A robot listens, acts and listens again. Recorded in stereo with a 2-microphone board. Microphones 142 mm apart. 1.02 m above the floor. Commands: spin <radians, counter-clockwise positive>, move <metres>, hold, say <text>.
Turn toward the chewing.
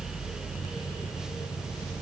hold
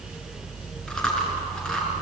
spin 0.52
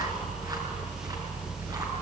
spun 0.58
hold
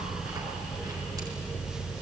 hold
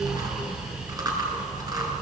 spin -0.44
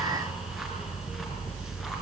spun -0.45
hold
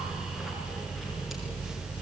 hold
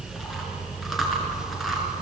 say Facing the chewing, over 4 m away.